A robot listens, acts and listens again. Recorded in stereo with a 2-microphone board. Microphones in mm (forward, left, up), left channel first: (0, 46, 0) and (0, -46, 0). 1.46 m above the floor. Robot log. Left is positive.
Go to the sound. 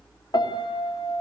note: The piano: about 50° left or 130° left.
cmd yaw +50
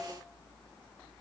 cmd idle
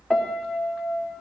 cmd fwd 1.0
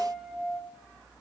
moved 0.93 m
cmd fwd 1.0
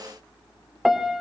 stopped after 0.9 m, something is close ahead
end: Arrived at the piano, straight ahead.